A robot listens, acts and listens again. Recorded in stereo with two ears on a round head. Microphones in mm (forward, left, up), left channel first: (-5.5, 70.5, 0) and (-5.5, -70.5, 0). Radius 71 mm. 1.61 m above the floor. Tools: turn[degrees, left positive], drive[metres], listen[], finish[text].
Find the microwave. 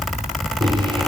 Thought: The microwave: about 30° right or 150° right.
Action: turn[-30]
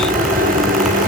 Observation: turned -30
Thought: So it is at 120° right.
Action: turn[-120]
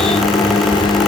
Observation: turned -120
Thought: The microwave is now 30° left.
Action: turn[30]
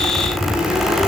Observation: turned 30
Action: finish[Facing the microwave.]